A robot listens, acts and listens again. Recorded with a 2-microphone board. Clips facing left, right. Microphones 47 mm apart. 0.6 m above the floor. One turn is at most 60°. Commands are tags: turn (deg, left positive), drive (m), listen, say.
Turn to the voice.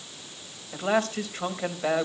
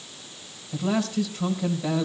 <turn deg="45"/>
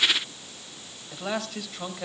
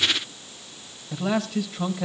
<say>Found it: a man speaking, straight ahead, 2 to 4 m away.</say>